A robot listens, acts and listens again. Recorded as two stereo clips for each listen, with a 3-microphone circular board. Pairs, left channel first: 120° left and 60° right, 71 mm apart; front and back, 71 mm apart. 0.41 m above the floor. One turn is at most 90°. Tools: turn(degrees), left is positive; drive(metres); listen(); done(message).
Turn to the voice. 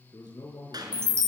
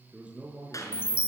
turn(degrees=90)
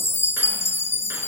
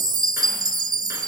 turn(degrees=15)
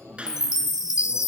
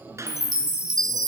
listen()
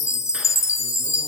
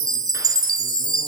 done("I heard a man speaking from this way, but can't make it out now.")